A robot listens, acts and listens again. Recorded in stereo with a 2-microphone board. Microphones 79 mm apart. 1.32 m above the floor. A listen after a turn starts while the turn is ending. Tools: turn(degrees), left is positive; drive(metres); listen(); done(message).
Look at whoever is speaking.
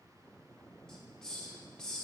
listen()
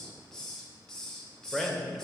turn(degrees=30)
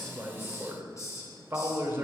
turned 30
turn(degrees=-25)
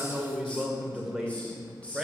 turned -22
done("Found it: a man speaking, straight ahead, 1 to 2 m away.")